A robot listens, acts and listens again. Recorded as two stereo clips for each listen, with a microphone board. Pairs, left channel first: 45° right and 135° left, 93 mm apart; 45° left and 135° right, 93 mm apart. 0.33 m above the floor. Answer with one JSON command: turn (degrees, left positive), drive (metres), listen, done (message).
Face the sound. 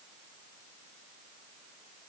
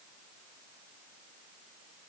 {"listen": true}
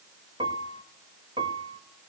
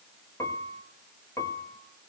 {"turn": 105}
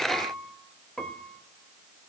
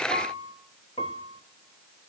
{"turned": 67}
{"turn": 35}
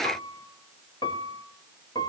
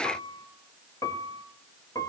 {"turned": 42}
{"done": "Facing the piano, 1 to 2 m away."}